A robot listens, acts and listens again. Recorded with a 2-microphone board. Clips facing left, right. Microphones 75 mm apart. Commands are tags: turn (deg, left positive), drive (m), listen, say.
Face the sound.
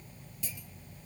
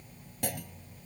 <turn deg="-65"/>
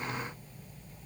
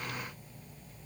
<listen/>
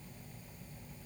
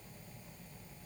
<say>I heard a clunk, but can't make it out now. It was about straight ahead or 50° right.</say>